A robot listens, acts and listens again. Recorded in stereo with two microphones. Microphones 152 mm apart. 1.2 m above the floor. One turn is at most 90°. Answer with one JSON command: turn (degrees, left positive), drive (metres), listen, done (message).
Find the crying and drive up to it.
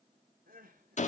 {"turn": -70}
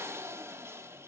{"listen": true}
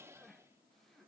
{"drive": 1.0}
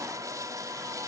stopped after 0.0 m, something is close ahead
{"listen": true}
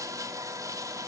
{"listen": true}
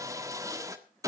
{"done": "Facing where the crying came from. I can't hear it now. I did not reach it."}